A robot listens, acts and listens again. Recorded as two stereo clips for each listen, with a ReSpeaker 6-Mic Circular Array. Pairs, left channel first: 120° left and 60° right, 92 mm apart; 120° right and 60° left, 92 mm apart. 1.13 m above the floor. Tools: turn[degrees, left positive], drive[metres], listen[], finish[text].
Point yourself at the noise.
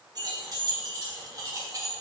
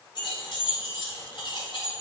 Thought: The keys jangling: 105° right.
Action: turn[-105]
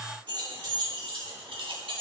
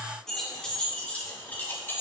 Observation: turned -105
Thought: The keys jangling is now 60° right.
Action: turn[-60]
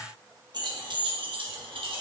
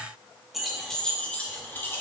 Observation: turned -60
Thought: The keys jangling is now 60° right.
Action: turn[-60]
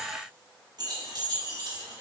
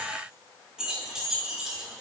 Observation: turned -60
Thought: The keys jangling is now 25° right.
Action: turn[-25]
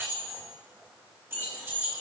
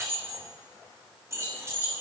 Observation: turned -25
Action: finish[Facing the keys jangling, 1 to 2 m away.]